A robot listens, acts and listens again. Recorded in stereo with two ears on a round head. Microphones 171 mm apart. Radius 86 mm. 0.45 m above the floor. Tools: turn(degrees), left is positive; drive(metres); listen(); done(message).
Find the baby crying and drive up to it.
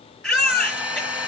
turn(degrees=30)
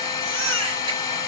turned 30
turn(degrees=-30)
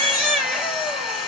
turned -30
drive(metres=1.0)
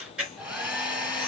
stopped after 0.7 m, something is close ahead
done("Blocked. The baby crying is further on, straight ahead.")